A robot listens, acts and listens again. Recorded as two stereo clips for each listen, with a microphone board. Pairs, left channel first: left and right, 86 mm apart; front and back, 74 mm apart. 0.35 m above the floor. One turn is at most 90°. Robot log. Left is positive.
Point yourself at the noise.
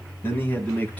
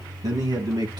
note: The man speaking: 160° left.
cmd yaw +90
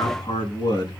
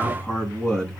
note: The man speaking is now 80° left.
cmd yaw +80
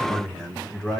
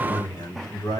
note: The man speaking is now 10° left.
cmd yaw +10
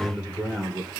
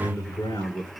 end: Facing the man speaking, over 4 m away.